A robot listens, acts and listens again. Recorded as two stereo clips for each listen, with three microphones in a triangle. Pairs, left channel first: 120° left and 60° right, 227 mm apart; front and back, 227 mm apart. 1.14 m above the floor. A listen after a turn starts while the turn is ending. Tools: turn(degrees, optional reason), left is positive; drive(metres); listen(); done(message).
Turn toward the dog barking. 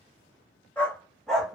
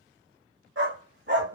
turn(degrees=-150, reason="The dog barking: 150° right.")
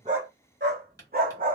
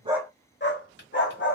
turn(degrees=-15, reason="The dog barking is now 15° right.")
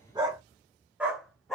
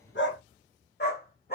turn(degrees=35, reason="The dog barking is now 35° left.")
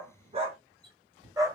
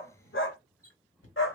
turn(degrees=15, reason="The dog barking is now 15° left.")
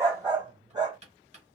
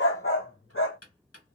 turn(degrees=10, reason="The dog barking is now 10° left.")
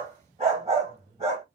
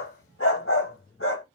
done("Facing the dog barking, 1 to 2 m away.")